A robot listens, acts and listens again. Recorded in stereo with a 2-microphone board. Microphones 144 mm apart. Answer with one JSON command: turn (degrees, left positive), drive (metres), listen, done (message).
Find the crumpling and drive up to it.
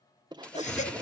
{"turn": 30}
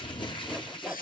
{"turn": 145}
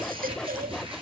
{"turn": -40}
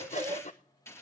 {"turn": 20}
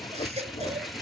{"drive": 1.0}
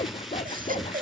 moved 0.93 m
{"drive": 1.0}
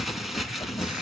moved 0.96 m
{"drive": 1.0}
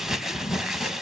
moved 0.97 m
{"drive": 1.0}
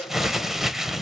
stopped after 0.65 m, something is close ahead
{"done": "Arrived at the crumpling, straight ahead."}